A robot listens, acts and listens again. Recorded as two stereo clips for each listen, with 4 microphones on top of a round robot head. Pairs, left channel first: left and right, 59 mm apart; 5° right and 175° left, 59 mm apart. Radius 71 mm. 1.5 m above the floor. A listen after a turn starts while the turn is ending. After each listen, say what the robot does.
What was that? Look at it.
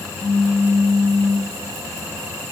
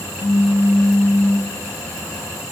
Turn 40° left.
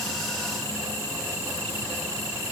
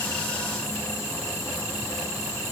Facing where the pop came from. I can't hear it now.